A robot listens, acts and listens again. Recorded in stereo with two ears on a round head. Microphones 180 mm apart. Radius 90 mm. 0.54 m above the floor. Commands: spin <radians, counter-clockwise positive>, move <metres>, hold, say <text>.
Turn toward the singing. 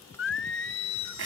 spin 1.13
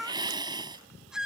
say Facing the singing.